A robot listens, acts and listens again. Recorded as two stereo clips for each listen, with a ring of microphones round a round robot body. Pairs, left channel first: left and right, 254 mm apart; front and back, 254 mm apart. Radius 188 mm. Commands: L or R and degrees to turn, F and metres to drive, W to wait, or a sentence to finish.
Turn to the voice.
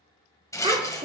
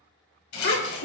R25
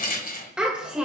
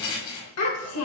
Found it: a child speaking, straight ahead, 2 to 4 m away.